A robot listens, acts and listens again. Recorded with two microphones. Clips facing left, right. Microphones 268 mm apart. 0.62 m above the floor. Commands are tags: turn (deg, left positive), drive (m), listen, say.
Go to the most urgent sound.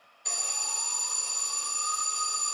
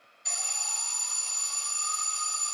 <turn deg="60"/>
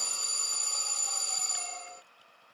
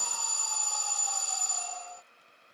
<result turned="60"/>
<turn deg="35"/>
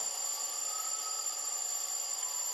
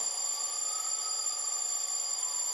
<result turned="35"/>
<drive m="1.0"/>
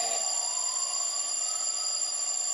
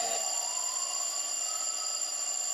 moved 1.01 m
<drive m="1.0"/>
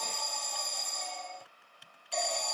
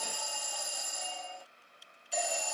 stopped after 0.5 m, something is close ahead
<turn deg="-10"/>
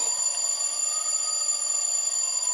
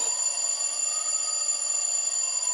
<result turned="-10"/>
<say>Arrived at the alarm, straight ahead.</say>